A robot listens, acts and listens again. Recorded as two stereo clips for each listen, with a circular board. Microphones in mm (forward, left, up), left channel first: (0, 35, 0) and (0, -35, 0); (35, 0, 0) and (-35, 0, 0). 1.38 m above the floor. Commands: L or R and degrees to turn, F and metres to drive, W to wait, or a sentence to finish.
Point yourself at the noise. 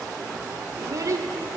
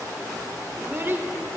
R125
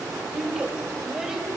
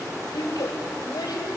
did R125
R10
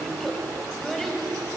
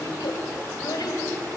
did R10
Facing the child speaking.